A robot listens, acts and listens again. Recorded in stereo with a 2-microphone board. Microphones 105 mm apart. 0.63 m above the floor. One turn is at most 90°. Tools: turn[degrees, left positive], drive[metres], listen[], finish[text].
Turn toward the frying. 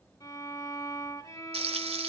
Thought: The frying: about 70° right or 110° right.
Action: turn[-70]
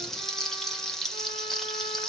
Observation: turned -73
Action: finish[Found it: frying, straight ahead, 1 to 2 m away.]